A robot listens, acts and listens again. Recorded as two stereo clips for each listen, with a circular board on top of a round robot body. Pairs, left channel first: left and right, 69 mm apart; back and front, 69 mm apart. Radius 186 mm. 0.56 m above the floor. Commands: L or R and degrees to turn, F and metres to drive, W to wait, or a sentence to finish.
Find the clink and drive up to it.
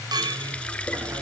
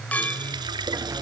R110
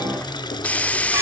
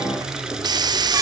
W
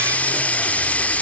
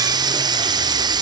W
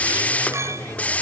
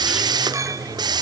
R40
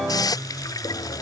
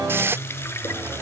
W
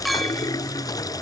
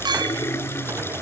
F1.0
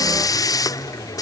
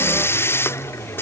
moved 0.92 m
W
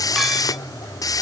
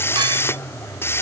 W
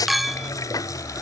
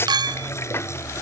F1.0
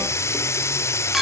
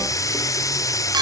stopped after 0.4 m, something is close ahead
Arrived at the clink, straight ahead.